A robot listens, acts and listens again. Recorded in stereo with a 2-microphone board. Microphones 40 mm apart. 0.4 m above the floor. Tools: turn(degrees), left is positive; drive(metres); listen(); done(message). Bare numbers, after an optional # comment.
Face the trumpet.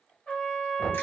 # The trumpet: about 25° left or 155° left.
turn(25)
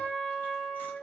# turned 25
done("Found it: a trumpet, straight ahead, 1 to 2 m away.")